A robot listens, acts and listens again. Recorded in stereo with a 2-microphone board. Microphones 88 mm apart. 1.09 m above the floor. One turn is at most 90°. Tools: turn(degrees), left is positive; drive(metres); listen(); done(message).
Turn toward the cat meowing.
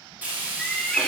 turn(degrees=30)
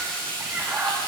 turn(degrees=-20)
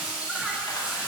listen()
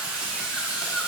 listen()
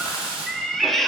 done("Found it: a cat meowing, straight ahead, under 1 m away.")